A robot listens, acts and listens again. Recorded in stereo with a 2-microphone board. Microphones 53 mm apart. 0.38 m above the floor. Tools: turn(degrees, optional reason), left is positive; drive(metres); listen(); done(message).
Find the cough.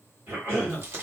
turn(degrees=-40, reason="The cough: about 40° right or 140° right.")
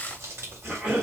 turn(degrees=-10, reason="So it is at 10° right.")
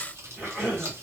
done("Found it: a cough, straight ahead, 2 to 4 m away.")